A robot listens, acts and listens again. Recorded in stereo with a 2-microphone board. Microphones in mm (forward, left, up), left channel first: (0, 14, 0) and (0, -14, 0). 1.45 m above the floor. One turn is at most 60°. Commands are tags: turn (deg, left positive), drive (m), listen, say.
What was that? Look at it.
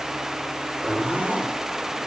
<turn deg="-60"/>
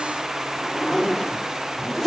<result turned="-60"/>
<turn deg="-15"/>
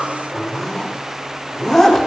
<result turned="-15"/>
<say>Found it: a zipper, straight ahead, 2 to 4 m away.</say>